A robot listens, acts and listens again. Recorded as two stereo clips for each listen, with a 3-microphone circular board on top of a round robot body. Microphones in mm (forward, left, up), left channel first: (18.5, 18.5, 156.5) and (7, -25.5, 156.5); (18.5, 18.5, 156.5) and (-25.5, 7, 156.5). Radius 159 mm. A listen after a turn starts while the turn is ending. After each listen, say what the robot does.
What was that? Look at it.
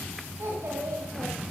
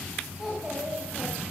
Turn 85° right.
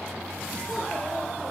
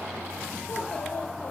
Keep listening.
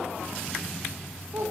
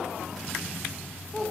Turn 70° right.
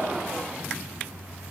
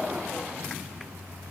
Keep listening.
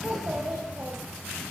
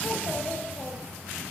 Turn 50° right.
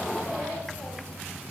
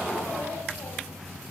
Keep listening.
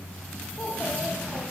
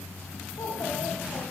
Turn 10° left.
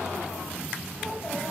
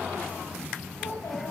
Found it: a child speaking, straight ahead.